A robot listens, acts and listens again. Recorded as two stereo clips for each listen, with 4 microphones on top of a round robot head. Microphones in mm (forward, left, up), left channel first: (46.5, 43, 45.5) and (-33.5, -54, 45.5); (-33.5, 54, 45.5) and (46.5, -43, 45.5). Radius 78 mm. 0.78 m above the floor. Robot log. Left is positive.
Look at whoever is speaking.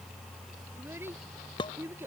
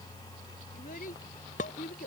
note: The child speaking: 155° left.
cmd yaw +155
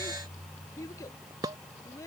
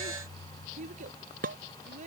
note: The child speaking is now 20° right.
cmd yaw -20
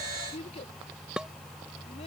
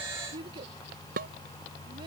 end: Found it: a child speaking, straight ahead.